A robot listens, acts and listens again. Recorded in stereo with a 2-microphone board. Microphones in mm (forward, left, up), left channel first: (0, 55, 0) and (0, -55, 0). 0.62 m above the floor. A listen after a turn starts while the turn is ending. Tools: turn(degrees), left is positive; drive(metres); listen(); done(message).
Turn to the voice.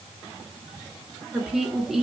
turn(degrees=30)
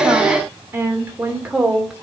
turn(degrees=-30)
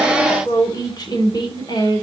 turn(degrees=45)
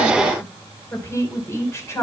turn(degrees=25)
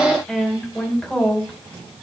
turn(degrees=10)
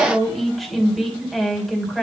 done("Facing the woman speaking.")